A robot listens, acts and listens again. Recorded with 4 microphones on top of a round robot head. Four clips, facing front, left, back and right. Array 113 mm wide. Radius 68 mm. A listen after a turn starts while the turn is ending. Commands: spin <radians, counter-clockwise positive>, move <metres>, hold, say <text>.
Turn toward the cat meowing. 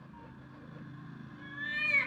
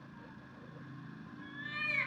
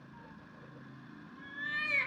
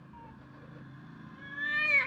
spin -1.75
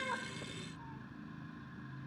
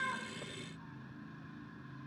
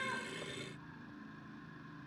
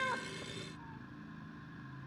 hold
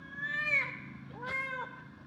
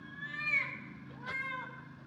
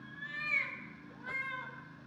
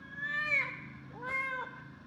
spin -0.79
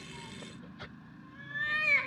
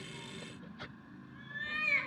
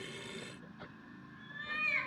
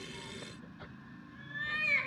say Found it: a cat meowing, straight ahead, under 1 m away.